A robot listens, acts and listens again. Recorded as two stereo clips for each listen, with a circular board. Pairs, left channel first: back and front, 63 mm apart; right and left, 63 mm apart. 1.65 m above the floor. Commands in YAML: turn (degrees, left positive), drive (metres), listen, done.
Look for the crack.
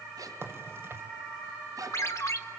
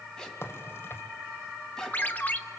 turn: -45
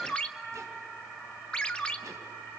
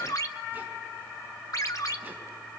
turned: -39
done: "Facing where the crack came from. I can't hear it now."